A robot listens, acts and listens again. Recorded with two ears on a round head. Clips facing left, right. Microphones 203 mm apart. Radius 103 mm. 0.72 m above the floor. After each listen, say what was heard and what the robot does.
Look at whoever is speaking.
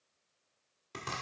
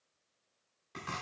Keep listening.
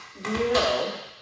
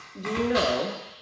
The woman speaking: about 25° right or 155° right. Turn 25° right.
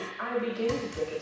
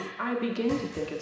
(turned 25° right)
So it is at 125° right. Turn 125° right.
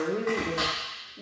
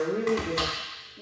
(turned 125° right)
The woman speaking is now 15° left. Turn 15° left.
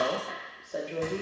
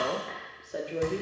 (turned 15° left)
Facing the woman speaking.